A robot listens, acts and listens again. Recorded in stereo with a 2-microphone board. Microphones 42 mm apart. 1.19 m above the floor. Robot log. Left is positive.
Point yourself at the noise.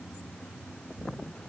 cmd idle
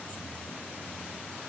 cmd idle
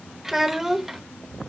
cmd yaw -30
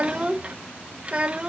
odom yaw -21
note: So it is at 150° right.
cmd yaw -150
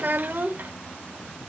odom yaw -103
note: The child speaking is now 50° right.
cmd yaw -50
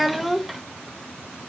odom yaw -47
end: Found it: a child speaking, straight ahead.